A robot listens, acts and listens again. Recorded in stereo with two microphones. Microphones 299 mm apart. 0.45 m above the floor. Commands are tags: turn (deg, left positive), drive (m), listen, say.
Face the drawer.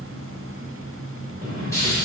<turn deg="-30"/>
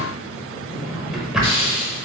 <say>Found it: a drawer, straight ahead.</say>